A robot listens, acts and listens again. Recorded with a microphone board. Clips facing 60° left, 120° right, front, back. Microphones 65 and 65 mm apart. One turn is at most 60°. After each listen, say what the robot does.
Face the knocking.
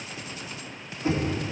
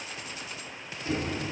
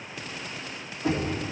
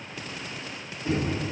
Facing the knocking.